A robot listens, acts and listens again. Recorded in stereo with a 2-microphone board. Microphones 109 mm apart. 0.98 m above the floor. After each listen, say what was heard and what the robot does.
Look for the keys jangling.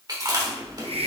Keep listening.
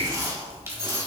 The keys jangling: about 25° right or 155° right. Turn 25° right.
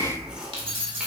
So it is at 130° right. Turn 130° right.
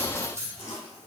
The keys jangling is now 25° right. Turn 25° right.
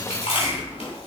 Keep listening.
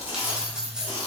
Facing the keys jangling, 1 to 2 m away.